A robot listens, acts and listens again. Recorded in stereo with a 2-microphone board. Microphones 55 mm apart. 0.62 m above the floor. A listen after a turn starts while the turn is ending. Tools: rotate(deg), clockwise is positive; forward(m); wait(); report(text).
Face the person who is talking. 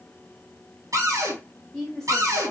rotate(-30)
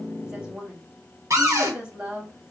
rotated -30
rotate(25)
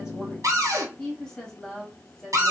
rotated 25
rotate(-10)
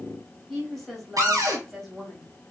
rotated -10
report("Facing the woman speaking.")